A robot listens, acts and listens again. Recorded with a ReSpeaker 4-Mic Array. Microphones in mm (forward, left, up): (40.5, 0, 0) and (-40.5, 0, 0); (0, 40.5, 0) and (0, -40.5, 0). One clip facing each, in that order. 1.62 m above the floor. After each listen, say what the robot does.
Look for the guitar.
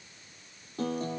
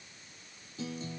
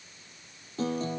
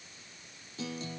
Turn 40° left.
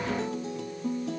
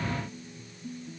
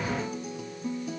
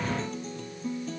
Found it: a guitar, straight ahead.